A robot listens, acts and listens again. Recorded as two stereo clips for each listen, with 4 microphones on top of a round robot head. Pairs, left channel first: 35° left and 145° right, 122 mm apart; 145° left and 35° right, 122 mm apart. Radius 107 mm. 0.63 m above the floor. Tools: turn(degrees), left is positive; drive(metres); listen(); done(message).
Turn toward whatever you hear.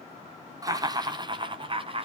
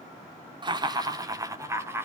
turn(degrees=-105)
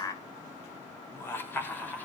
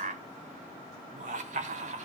turn(degrees=-40)
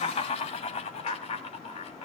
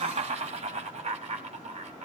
done("Facing the laughter.")